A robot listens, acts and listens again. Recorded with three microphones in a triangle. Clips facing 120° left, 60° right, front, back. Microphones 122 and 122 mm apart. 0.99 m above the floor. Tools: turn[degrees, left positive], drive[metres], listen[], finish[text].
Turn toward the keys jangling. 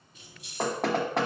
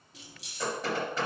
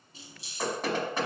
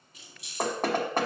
Thought: The keys jangling: 60° right.
Action: turn[-60]
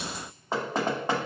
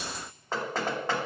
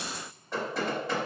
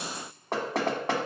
Action: listen[]
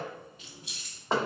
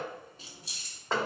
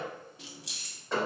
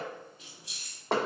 Action: finish[Found it: keys jangling, straight ahead.]